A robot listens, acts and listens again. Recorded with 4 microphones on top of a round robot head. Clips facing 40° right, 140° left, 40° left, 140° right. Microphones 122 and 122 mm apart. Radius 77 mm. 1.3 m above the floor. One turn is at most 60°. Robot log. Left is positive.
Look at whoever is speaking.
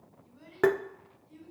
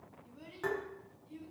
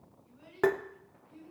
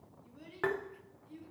note: The child speaking: 150° right.
cmd yaw -60
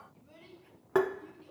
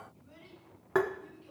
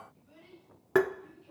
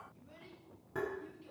note: The child speaking is now 100° right.
cmd yaw -60
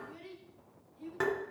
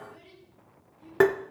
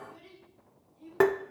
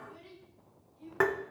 note: The child speaking is now 45° right.
cmd yaw -45
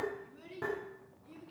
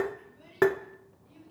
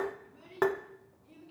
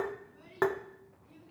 note: The child speaking is now 25° right.
cmd yaw -25
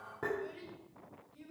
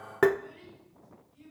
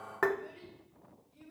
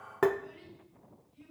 end: Found it: a child speaking, straight ahead.